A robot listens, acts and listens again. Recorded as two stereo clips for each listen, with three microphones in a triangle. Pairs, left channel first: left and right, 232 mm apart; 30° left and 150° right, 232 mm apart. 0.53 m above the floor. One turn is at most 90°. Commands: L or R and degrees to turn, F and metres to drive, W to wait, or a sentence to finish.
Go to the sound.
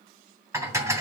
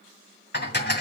R15
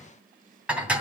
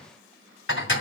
F1.0
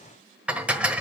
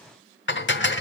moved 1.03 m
F1.0
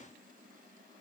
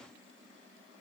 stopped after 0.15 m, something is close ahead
W
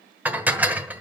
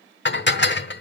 R10
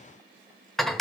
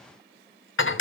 Arrived at the dishes clattering, straight ahead.